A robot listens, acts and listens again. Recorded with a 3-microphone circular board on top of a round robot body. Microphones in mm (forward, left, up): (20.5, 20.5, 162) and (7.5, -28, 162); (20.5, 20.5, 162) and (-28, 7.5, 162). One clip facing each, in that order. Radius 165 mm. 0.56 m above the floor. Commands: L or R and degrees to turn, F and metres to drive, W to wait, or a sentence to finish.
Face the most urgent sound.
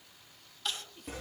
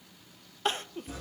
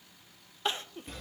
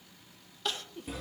R50
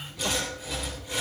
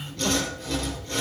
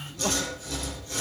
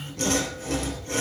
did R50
W
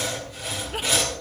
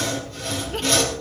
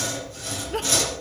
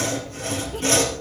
W
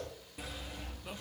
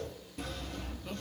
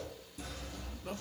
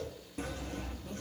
Facing where the crying came from. I can't hear it now.